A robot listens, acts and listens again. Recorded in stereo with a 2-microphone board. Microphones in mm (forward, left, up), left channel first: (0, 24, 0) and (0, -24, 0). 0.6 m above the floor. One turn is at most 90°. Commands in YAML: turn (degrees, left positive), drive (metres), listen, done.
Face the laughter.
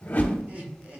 turn: -30
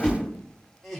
done: "Found it: laughter, straight ahead, 1 to 2 m away."